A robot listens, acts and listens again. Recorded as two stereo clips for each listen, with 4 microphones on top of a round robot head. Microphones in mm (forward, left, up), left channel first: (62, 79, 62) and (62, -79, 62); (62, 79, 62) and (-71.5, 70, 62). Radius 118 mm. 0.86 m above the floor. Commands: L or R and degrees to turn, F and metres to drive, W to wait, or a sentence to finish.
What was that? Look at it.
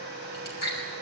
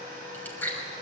L80
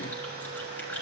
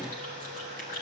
W
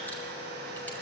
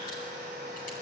W
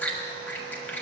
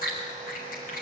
L10
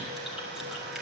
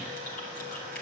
W
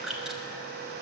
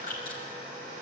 Facing the chewing.